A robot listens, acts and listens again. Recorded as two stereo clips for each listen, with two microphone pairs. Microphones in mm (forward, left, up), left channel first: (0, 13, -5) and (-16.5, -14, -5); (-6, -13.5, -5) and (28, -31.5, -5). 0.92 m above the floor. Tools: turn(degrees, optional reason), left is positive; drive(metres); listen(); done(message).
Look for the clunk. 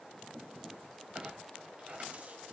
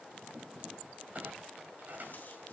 turn(degrees=-70, reason="The clunk: 70° right.")
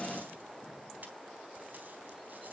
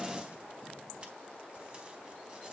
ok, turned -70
done("I heard a clunk from this way, but can't make it out now.")